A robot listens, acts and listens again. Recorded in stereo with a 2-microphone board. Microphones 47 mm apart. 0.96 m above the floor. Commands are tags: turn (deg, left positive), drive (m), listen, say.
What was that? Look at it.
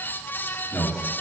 <turn deg="20"/>
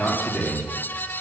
<say>Found it: a man speaking, straight ahead.</say>